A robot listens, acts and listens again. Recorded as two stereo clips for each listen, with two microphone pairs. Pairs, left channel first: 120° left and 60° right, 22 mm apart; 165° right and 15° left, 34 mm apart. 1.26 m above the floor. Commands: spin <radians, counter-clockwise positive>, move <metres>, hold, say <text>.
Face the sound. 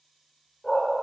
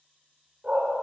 spin 1.31
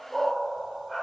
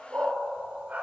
spin 0.87
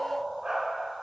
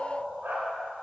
say Facing the dog barking.